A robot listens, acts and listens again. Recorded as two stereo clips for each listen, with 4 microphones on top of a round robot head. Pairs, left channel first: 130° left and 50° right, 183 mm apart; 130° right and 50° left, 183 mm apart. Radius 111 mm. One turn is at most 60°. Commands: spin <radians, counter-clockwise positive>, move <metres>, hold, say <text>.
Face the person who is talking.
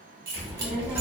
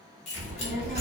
spin 0.52
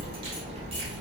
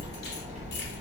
say Facing the child speaking.